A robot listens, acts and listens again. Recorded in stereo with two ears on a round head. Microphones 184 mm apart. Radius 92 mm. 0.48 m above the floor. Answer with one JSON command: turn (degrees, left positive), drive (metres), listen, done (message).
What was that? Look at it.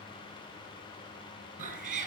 {"turn": -40}
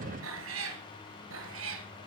{"turn": -105}
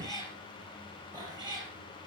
{"turn": -20}
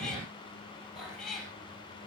{"done": "Facing the cat meowing."}